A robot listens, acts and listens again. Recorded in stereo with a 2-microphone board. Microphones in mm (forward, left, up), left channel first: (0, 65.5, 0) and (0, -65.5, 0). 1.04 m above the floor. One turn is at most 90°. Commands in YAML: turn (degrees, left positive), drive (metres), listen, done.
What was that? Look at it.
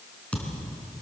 turn: 30
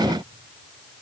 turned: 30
listen: true
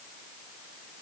done: "I heard a thud, but can't make it out now. It was about 20° right or 140° left."